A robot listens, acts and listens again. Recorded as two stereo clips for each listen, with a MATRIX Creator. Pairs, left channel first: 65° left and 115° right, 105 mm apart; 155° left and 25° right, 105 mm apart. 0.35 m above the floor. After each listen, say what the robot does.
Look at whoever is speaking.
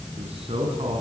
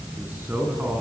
Turn 95° right.
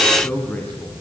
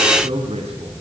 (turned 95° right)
Turn 10° right.
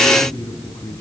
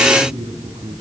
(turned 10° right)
Facing the man speaking, 2 to 4 m away.